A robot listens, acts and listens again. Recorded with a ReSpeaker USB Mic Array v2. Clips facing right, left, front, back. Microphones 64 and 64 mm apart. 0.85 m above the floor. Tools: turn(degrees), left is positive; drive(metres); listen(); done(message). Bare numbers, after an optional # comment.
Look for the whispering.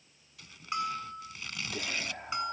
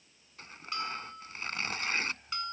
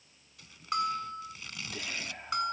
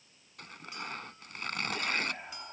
# The whispering: 100° right.
turn(-100)
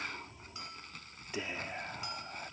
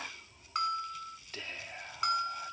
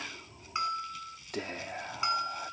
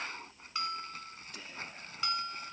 # The whispering is now 15° right.
turn(-15)
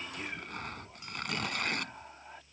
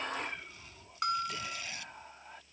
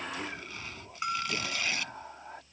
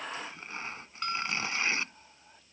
done("Facing the whispering.")